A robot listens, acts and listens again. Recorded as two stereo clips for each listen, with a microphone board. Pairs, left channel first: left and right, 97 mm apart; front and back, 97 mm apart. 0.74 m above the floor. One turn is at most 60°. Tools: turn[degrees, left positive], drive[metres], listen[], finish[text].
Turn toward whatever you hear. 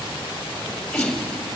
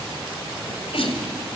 Thought: The sneeze: 10° left.
Action: turn[10]
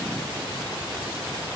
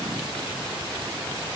Action: finish[Facing where the sneeze came from. I can't hear it now.]